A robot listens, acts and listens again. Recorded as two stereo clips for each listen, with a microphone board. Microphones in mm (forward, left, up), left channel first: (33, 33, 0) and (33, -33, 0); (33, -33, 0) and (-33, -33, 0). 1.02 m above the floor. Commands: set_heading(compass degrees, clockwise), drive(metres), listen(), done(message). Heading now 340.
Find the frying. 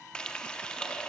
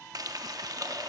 set_heading(170)
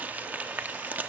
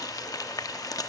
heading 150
set_heading(175)
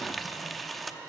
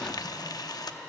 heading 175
done("Facing the frying.")